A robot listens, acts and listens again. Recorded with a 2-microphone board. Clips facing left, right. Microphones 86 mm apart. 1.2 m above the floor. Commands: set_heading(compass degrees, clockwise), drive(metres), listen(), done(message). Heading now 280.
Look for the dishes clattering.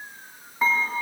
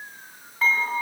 set_heading(260)
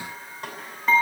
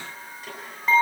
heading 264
done("Facing the dishes clattering, over 4 m away.")